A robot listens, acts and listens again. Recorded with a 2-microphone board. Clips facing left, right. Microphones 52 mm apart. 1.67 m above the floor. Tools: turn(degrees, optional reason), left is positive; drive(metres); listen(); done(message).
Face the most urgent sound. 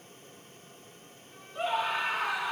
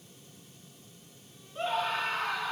turn(degrees=30)
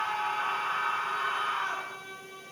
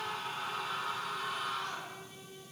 turn(degrees=140, reason="So it is at 140° left.")
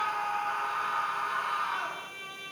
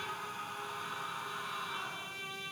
turn(degrees=60, reason="The scream is now 60° left.")
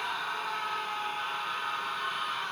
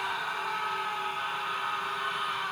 done("Facing the scream.")